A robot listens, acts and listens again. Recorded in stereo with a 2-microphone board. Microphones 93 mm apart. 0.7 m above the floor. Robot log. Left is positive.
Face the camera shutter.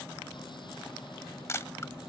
note: The camera shutter: about 30° left or 150° left.
cmd yaw +30
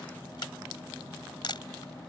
note: So it is at 120° left.
cmd yaw +120
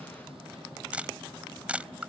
note: The camera shutter is now 15° right.
cmd yaw -15
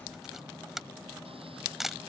end: Found it: a camera shutter, straight ahead.